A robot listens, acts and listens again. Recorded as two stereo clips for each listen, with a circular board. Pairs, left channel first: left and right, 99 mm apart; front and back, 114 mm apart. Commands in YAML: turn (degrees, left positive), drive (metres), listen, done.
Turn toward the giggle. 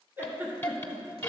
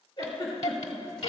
turn: -30
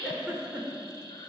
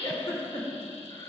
turn: -10
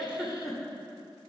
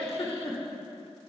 done: "Found it: a giggle, straight ahead, 2 to 4 m away."